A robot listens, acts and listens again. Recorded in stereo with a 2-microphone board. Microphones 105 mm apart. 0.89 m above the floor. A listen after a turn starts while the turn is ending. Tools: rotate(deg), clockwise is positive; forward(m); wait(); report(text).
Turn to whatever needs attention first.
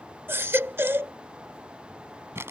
rotate(20)
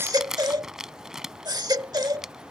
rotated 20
rotate(140)
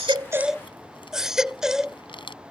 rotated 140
report("Found it: a baby crying, straight ahead.")